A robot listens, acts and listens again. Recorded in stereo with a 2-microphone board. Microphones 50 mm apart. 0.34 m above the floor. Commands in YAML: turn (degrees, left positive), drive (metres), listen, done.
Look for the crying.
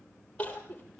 turn: 25
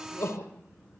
turn: 130
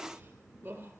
turn: -35
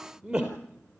turn: -15
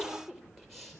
done: "Facing the crying."